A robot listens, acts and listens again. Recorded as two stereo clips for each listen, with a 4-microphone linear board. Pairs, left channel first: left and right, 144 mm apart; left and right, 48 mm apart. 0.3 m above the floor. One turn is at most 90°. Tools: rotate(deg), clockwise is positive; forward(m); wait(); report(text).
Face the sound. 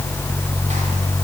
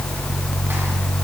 wait()
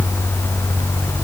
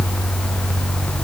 wait()
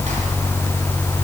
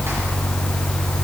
report("I can't make out anything.")